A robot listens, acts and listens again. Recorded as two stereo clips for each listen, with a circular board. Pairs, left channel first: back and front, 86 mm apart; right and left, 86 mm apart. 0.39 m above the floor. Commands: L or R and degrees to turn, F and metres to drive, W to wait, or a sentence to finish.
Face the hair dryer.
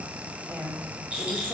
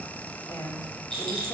W
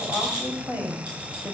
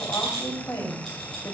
W
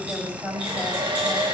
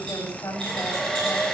Found it: a hair dryer, straight ahead.